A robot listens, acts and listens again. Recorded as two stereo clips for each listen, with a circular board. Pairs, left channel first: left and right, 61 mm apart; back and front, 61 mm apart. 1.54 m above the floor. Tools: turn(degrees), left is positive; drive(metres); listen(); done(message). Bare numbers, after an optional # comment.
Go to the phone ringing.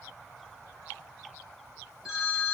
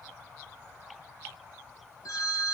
# The phone ringing: 170° right.
turn(-170)
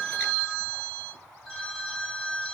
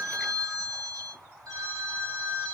# The phone ringing is now 10° left.
turn(10)
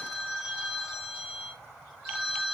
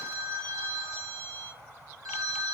drive(1.0)
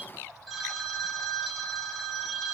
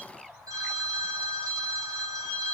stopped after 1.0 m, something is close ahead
done("Arrived at the phone ringing, straight ahead.")